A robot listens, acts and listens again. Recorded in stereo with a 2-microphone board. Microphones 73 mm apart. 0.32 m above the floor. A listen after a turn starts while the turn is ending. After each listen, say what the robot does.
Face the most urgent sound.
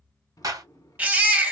Turn 20° right.
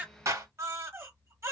Turn 135° right.
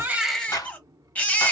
Turn 25° left.
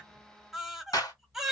Found it: a baby crying, straight ahead.